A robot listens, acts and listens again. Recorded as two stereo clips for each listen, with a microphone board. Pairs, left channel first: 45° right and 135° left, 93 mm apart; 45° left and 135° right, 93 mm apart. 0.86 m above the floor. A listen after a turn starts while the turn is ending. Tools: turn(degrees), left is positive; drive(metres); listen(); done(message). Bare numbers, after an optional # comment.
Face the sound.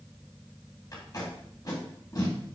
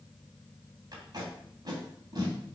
# The tape being pulled: 90° right.
turn(-90)
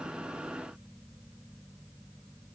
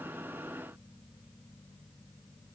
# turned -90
listen()
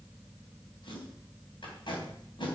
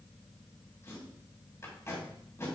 # The tape being pulled is now 15° right.
turn(-15)
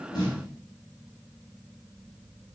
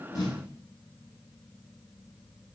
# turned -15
done("Found it: tape being pulled, straight ahead, 2 to 4 m away.")